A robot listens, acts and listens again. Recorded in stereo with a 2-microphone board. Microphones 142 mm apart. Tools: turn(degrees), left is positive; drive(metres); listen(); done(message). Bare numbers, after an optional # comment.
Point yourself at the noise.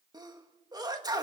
# The sneeze: about 30° right or 150° right.
turn(-30)
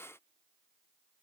listen()
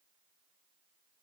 done("I heard a sneeze, but can't make it out now. It was about straight ahead or 120° right.")